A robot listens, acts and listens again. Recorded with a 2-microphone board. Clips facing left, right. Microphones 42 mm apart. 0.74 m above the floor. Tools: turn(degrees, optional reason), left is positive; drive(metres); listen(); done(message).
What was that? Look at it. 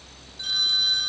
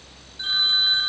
turn(degrees=-30, reason="The phone ringing: about 30° right or 150° right.")
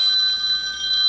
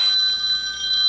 done("Found it: a phone ringing, straight ahead.")